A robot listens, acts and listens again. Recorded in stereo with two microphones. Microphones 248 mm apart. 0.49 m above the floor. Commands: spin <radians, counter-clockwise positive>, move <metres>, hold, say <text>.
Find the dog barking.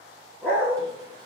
spin -0.52
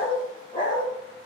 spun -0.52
spin 0.35
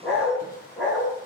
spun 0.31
say Found it: a dog barking, straight ahead.